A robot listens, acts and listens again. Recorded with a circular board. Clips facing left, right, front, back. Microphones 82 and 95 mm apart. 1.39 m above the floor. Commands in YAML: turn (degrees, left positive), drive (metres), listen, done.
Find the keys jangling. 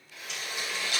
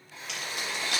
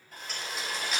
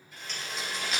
turn: -90
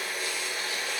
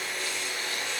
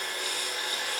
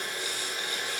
listen: true
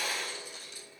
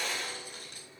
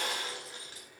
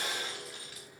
turn: -60
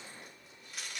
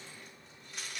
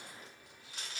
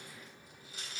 done: "Found it: keys jangling, straight ahead."